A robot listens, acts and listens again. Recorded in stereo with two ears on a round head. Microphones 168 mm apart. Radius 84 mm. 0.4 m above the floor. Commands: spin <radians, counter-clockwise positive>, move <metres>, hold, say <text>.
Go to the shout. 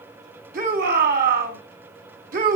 spin -0.87
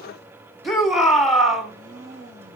move 1.0
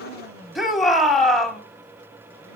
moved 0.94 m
move 1.0
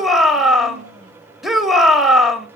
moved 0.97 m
move 1.0
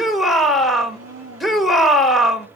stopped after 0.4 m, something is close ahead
say Arrived at the shout, straight ahead.